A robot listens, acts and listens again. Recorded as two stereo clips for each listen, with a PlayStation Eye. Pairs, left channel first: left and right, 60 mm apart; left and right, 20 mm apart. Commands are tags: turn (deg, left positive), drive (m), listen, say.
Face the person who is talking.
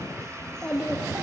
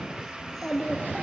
<turn deg="30"/>
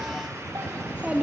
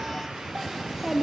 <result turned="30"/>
<turn deg="-20"/>
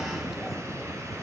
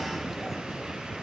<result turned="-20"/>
<listen/>
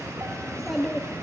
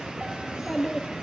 <say>Found it: a child speaking, straight ahead.</say>